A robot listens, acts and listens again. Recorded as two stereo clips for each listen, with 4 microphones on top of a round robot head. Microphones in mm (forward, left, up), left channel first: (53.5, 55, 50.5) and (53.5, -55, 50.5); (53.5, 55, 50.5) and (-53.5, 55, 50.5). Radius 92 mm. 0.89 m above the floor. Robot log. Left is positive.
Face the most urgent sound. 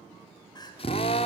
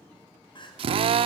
note: The crying: 40° left.
cmd yaw +40
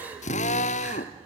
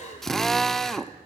note: The crying is now 15° right.
cmd yaw -15
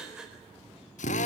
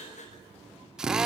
end: Facing the crying.